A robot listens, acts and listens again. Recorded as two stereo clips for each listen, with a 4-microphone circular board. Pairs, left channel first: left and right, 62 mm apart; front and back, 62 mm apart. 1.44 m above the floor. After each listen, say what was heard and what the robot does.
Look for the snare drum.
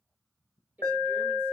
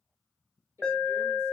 Keep listening.
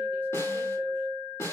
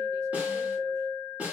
The snare drum: 120° left. Turn 120° left.
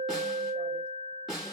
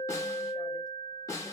The snare drum is now 10° right. Turn 10° right.
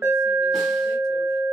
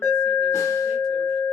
Keep listening.
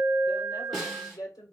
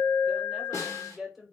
Found it: a snare drum, straight ahead.